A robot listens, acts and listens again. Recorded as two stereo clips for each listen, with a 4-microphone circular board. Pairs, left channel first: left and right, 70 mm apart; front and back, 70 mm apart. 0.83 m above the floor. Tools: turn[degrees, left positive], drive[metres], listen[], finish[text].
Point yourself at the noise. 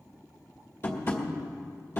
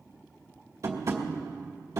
Thought: The tapping: 140° left.
Action: turn[140]
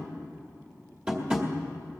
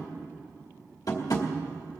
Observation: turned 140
Thought: The tapping is now 20° right.
Action: turn[-20]
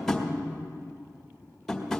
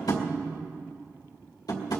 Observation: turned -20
Action: finish[Facing the tapping, 2 to 4 m away.]